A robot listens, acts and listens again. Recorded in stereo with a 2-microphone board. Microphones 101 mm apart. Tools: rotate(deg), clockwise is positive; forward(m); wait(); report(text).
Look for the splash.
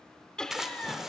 rotate(30)
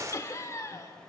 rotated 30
rotate(145)
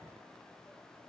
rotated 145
report("I heard a splash from this way, but can't make it out now.")